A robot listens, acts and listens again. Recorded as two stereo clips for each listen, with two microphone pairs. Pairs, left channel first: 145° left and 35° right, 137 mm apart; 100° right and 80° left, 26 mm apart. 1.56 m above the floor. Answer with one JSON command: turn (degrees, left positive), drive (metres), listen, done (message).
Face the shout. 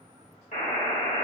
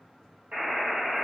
{"listen": true}
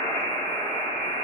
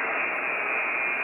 {"listen": true}
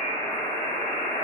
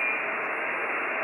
{"done": "I can't make out a shout to turn to."}